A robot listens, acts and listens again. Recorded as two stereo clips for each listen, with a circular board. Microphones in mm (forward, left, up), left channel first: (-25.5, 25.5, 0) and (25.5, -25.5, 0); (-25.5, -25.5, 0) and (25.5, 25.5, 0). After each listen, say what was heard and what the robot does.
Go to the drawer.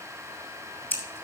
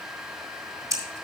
Keep listening.
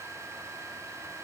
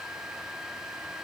Keep listening.
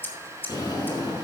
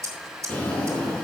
The drawer: 155° left. Turn 155° left.
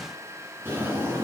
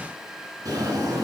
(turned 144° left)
The drawer is now 15° left. Turn 15° left.
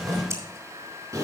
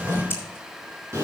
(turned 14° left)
Drive 1.0 m forward.
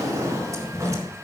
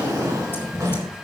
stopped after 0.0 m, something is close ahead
Something is in my way. I am facing the drawer but have not reached it.